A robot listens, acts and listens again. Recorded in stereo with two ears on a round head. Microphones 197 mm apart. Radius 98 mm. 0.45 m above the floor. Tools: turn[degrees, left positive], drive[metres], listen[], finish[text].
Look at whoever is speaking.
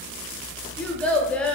Action: turn[30]
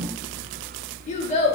Thought: So it is at 145° left.
Action: turn[145]
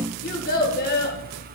Thought: The child speaking is now 50° left.
Action: turn[50]
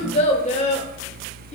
Thought: The child speaking is now 35° left.
Action: turn[35]
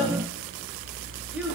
Action: listen[]
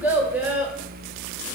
Thought: The child speaking is now 10° right.
Action: turn[-10]
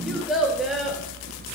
Action: finish[Found it: a child speaking, straight ahead, under 1 m away.]